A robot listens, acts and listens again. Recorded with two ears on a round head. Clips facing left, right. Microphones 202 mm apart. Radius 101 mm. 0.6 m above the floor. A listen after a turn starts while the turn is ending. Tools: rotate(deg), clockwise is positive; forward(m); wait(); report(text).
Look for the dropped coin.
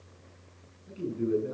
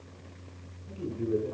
wait()
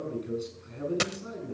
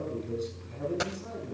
rotate(-40)
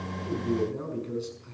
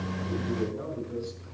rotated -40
wait()
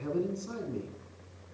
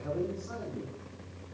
report("I heard a dropped coin, but can't make it out now. It was about straight ahead or 100° left.")